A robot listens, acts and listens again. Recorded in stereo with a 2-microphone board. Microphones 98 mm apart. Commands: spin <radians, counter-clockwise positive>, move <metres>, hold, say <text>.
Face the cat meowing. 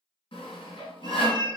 spin -0.87
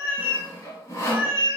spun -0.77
spin -0.44
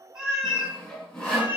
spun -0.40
spin -0.26
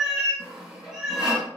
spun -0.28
say Facing the cat meowing, 2 to 4 m away.